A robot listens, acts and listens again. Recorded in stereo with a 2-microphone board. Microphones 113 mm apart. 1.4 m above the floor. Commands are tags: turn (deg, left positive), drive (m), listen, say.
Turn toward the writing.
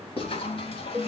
<turn deg="55"/>
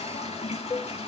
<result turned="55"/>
<listen/>
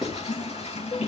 <say>Facing the writing.</say>